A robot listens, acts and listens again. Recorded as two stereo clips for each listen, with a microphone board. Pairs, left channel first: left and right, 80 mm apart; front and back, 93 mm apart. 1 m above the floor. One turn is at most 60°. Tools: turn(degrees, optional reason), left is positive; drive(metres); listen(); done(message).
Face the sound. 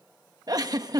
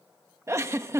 turn(degrees=-60, reason="The giggle: 125° right.")
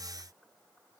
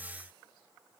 turn(degrees=-60, reason="Nothing new. It was at 65° right.")
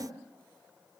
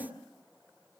listen()
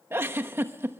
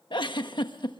turn(degrees=-30, reason="The giggle is now 30° right.")
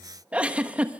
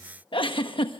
turn(degrees=-15, reason="The giggle is now 15° right.")
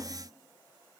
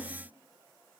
listen()
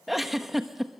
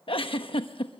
done("Found it: a giggle, straight ahead, 1 to 2 m away.")